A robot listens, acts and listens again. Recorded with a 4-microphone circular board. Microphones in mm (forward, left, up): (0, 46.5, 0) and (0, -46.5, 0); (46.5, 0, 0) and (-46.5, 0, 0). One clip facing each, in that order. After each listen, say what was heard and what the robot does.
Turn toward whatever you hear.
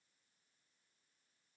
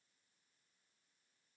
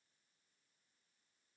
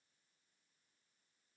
Keep listening.
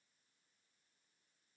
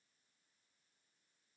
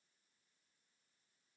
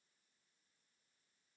Keep listening.
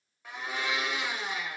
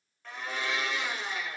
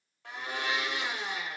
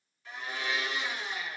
The blender: 10° left. Turn 10° left.
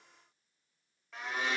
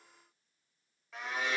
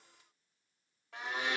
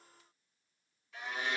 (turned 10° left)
Found it: a blender, straight ahead.